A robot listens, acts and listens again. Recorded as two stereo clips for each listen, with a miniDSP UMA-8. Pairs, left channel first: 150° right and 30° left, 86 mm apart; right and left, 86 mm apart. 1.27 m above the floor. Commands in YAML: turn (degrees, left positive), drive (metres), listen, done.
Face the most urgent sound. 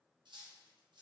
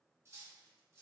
listen: true
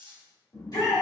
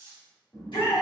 turn: -110
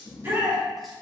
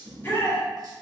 turn: -30
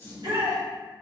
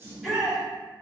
done: "Found it: a shout, straight ahead, 1 to 2 m away."